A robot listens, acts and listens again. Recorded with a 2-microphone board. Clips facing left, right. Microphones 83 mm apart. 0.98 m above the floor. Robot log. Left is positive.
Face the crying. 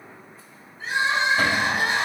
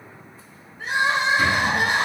note: The crying: about 60° right or 120° right.
cmd yaw -60
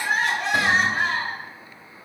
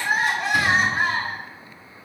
end: Found it: crying, straight ahead, 1 to 2 m away.